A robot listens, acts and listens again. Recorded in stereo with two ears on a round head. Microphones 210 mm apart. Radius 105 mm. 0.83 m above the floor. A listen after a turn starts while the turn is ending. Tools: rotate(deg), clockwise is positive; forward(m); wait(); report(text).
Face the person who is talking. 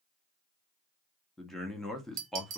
rotate(-30)
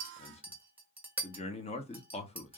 rotate(-150)
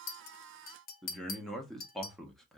report("Found it: a man speaking, straight ahead.")